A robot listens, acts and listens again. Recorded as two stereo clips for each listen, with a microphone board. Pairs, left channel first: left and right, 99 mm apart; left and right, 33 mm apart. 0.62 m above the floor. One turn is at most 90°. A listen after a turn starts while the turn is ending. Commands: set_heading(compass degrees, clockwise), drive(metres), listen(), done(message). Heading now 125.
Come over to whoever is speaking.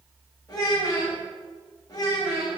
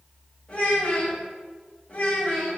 set_heading(85)
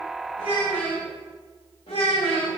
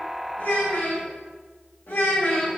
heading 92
set_heading(2)
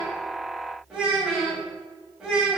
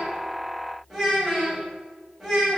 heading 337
set_heading(347)
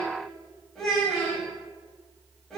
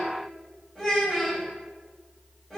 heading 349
drive(1.0)
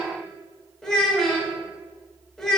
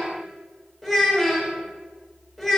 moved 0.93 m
drive(1.0)
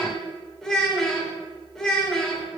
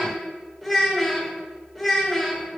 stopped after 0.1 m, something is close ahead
done("I am next to the child speaking.")